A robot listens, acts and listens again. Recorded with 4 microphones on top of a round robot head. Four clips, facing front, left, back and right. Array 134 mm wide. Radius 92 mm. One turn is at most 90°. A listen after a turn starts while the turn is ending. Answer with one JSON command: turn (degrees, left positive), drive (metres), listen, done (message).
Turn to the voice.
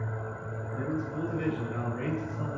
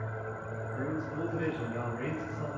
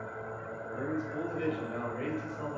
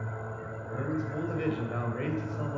{"turn": -90}
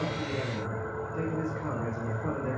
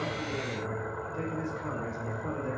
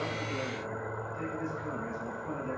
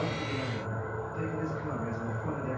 {"turn": 25}
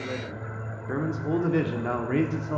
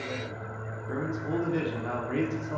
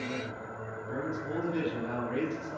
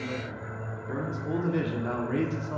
{"turn": -10}
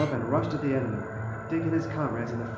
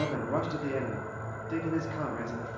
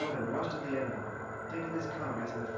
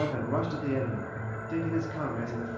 {"done": "Facing the man speaking."}